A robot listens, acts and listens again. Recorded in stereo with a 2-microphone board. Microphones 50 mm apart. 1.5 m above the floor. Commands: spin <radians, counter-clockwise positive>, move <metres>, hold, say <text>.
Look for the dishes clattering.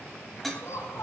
spin 0.52
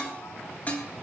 spin 2.53
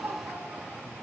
hold
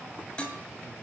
spin 0.35
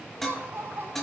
say Found it: dishes clattering, straight ahead, 2 to 4 m away.